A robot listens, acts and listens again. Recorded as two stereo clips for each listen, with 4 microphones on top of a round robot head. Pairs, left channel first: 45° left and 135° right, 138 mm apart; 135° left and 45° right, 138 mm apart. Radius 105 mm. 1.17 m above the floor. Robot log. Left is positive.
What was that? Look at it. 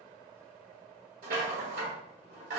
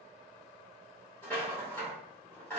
note: The rattle: 150° right.
cmd yaw -150
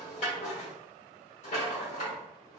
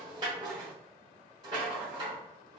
note: The rattle is now 10° left.
cmd yaw +10
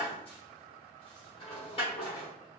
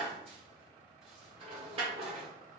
end: Found it: a rattle, straight ahead, under 1 m away.